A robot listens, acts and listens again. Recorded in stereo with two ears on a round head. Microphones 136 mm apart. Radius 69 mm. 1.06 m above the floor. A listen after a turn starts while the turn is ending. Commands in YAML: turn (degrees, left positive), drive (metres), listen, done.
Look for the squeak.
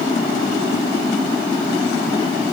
listen: true
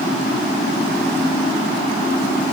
listen: true
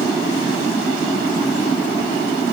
done: "I can't make out a squeak to turn to."